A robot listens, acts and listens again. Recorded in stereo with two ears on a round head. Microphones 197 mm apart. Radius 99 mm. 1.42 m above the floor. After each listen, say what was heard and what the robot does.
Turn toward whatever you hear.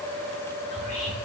The whispering: about 35° left or 145° left. Turn 35° left.
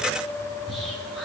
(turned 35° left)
Found it: whispering, straight ahead, over 4 m away.